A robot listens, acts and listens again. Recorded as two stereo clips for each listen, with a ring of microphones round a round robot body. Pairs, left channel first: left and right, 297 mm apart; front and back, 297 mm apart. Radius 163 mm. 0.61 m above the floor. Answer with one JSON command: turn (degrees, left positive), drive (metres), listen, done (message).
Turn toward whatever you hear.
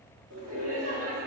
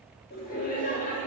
{"turn": -60}
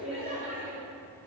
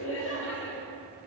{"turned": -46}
{"turn": -40}
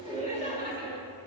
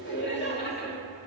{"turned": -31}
{"turn": -45}
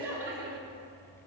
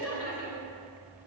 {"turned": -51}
{"turn": -20}
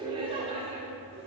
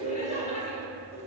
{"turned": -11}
{"turn": -20}
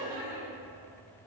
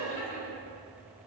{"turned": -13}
{"turn": -10}
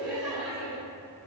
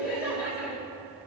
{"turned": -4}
{"done": "Found it: laughter, straight ahead."}